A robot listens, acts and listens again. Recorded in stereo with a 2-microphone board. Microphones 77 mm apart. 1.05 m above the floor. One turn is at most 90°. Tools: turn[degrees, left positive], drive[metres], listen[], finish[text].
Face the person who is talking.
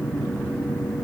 Action: listen[]
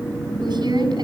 Action: turn[-90]
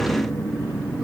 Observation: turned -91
Action: finish[Facing the woman speaking, over 4 m away.]